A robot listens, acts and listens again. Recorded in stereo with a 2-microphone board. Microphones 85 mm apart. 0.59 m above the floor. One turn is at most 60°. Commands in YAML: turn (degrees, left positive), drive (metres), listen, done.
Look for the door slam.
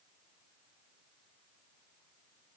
listen: true
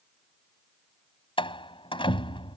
turn: 60
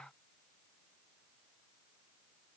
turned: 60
turn: 30
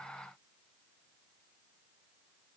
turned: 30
done: "Facing where the door slam came from. I can't hear it now."